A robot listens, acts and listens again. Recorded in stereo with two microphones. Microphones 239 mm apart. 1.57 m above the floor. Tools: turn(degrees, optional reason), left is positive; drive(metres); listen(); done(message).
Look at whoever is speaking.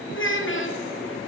turn(degrees=55, reason="The child speaking: about 55° left or 125° left.")
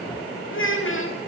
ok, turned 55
turn(degrees=65, reason="So it is at 65° left.")
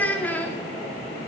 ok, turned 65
done("Found it: a child speaking, straight ahead, 2 to 4 m away.")